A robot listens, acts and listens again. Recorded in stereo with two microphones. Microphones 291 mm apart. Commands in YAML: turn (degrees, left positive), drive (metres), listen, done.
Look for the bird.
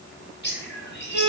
turn: 35
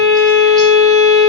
listen: true
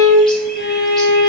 listen: true
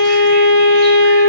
done: "I heard a bird, but can't make it out now. It was about straight ahead or 110° left."